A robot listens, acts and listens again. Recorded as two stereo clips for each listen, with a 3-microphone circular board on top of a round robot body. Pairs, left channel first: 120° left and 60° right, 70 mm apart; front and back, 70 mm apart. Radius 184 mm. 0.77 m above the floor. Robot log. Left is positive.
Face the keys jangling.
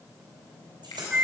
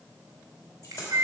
note: The keys jangling: 40° right.
cmd yaw -40
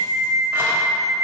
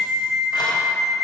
cmd idle
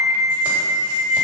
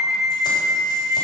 cmd idle
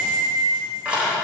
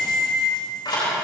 note: The keys jangling is now 15° left.
cmd yaw +15
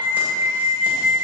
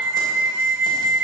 cmd idle
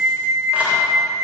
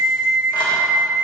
cmd idle
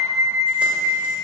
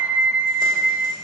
end: Facing where the keys jangling came from. I can't hear it now.